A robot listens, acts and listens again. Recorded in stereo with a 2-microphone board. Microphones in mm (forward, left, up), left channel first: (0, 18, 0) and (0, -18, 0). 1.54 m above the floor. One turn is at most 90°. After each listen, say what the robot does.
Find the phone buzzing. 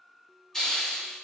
Keep listening.
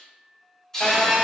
Turn 25° left.
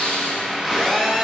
Found it: a phone buzzing, straight ahead, under 1 m away.